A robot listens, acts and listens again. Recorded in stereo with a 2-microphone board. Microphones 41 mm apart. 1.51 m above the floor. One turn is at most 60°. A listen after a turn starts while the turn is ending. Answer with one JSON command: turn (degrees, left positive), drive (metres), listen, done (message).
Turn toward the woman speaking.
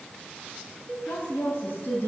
{"turn": 60}
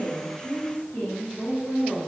{"turn": 55}
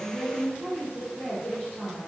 {"turn": 35}
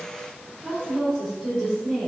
{"turn": 10}
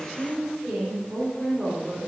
{"done": "Facing the woman speaking, over 4 m away."}